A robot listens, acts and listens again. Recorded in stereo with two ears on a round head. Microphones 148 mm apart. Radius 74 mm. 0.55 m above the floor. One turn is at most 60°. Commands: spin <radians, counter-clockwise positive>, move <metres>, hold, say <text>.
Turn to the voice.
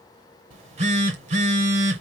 hold
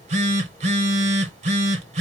hold
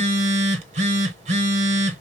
say I can't make out anyone speaking to turn to.